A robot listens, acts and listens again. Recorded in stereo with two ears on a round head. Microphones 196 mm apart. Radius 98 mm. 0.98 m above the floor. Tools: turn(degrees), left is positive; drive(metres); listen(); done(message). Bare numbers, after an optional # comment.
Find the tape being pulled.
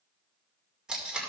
turn(-30)
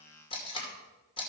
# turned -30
# So it is at 25° left.
turn(25)
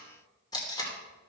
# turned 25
# The tape being pulled is now 20° left.
turn(20)
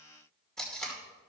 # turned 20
done("Found it: tape being pulled, straight ahead.")